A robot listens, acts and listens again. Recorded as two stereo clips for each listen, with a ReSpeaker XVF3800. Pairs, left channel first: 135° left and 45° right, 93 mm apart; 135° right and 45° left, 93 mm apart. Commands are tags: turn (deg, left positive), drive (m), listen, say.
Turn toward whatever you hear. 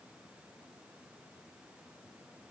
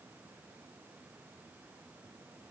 <listen/>
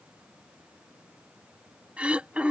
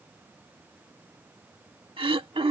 <turn deg="30"/>
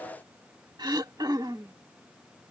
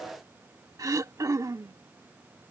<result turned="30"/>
<say>Found it: throat clearing, straight ahead.</say>